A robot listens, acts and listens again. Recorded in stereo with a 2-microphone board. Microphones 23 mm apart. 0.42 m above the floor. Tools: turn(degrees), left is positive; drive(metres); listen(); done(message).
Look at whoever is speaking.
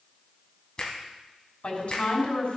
turn(degrees=65)
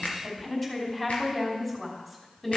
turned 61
turn(degrees=15)
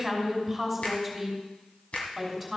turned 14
done("Facing the woman speaking.")